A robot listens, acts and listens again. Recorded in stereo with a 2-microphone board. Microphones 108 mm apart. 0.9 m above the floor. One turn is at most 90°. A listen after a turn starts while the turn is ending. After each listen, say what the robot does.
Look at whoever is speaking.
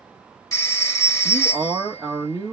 Turn 35° right.
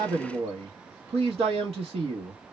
Turn 90° right.
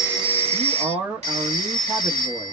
Turn 20° right.
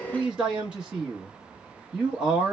Turn 10° right.
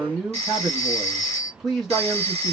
Facing the man speaking, under 1 m away.